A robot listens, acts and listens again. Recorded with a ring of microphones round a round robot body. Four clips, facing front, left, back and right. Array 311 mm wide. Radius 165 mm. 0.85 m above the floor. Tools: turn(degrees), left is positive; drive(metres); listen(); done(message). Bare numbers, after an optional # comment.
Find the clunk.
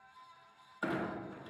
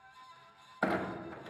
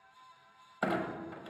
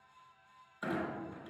# The clunk: 130° left.
turn(130)
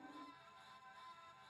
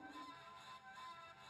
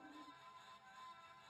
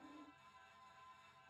done("Facing where the clunk came from. I can't hear it now.")